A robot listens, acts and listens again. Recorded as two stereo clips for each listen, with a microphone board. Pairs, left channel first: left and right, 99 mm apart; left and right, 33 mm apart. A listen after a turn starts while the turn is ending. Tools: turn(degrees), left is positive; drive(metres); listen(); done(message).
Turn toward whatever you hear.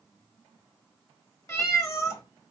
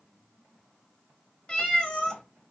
turn(degrees=35)
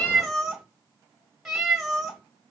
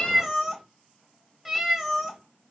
done("Facing the cat meowing, 1 to 2 m away.")